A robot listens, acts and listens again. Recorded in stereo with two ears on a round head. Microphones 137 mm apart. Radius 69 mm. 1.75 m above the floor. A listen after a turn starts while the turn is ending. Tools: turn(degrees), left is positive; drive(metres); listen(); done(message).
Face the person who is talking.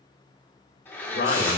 turn(degrees=65)
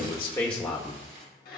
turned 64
done("Facing the man speaking, 1 to 2 m away.")